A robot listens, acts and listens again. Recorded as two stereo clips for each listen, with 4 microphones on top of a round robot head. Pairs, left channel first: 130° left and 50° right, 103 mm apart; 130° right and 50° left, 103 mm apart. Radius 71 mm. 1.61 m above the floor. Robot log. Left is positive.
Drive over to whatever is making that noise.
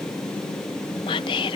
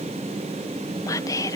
note: The whispering: 170° left.
cmd yaw +170
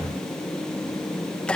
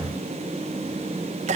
note: The whispering is now 45° left.
cmd yaw +45
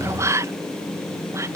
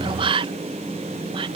note: The whispering is now 10° left.
cmd yaw +10
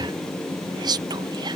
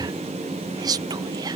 cmd fwd 1.0
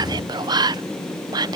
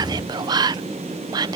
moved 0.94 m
cmd fwd 1.0
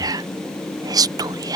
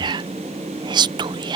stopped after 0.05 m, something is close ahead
end: I am next to the whispering.